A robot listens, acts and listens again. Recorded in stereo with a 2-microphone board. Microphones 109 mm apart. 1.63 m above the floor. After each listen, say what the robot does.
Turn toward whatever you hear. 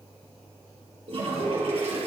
Turn 60° right.
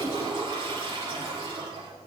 Turn 50° right.
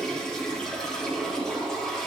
Facing the toilet flushing.